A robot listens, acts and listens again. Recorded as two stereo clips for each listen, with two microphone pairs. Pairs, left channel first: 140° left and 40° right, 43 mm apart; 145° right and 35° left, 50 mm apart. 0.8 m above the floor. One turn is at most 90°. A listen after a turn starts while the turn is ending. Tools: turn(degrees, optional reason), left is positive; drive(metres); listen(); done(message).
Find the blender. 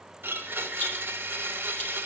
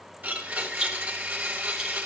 turn(degrees=-15, reason="The blender: 15° right.")
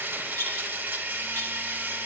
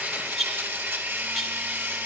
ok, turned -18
done("Found it: a blender, straight ahead.")